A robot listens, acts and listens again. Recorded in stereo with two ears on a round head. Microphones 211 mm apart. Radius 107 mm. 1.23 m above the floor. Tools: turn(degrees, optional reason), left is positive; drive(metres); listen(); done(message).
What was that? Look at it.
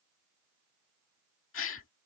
turn(degrees=60, reason="The gasp: about 60° left or 120° left.")
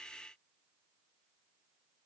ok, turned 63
listen()
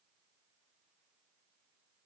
done("I heard a gasp, but can't make it out now. It was about straight ahead or 55° left.")